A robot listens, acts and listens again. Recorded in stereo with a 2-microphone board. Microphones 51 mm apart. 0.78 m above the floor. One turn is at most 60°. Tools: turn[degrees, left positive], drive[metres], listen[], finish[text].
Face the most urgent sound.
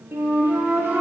Action: listen[]
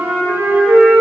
Action: listen[]
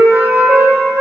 Action: finish[I can't make out anything urgent, only a flute.]